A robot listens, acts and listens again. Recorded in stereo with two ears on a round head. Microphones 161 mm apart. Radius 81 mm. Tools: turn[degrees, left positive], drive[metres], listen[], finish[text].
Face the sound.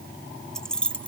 Action: turn[30]
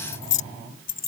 Thought: So it is at 125° left.
Action: turn[125]
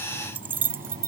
Thought: The keys jangling is now 15° right.
Action: turn[-15]
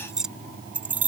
Thought: The keys jangling is now 10° right.
Action: turn[-10]
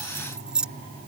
Action: finish[Facing the keys jangling.]